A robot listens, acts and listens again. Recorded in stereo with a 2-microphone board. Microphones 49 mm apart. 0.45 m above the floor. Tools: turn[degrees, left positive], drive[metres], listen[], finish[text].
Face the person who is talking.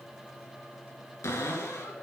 Action: listen[]
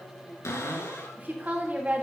Thought: The woman speaking: about 35° right or 145° right.
Action: turn[-35]
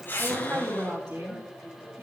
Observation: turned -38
Thought: So it is at 105° right.
Action: turn[-105]
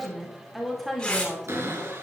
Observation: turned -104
Action: finish[Found it: a woman speaking, straight ahead.]